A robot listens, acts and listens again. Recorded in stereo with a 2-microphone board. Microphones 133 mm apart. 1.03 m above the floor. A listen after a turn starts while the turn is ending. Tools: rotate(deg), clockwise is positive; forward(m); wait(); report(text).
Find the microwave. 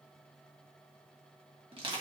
wait()
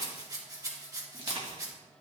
wait()
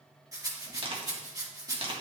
report("I can't make out a microwave to turn to.")